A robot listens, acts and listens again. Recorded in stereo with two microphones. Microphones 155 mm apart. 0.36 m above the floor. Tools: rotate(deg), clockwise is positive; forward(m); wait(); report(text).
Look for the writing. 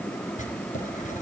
rotate(-55)
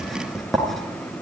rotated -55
report("Facing the writing, 2 to 4 m away.")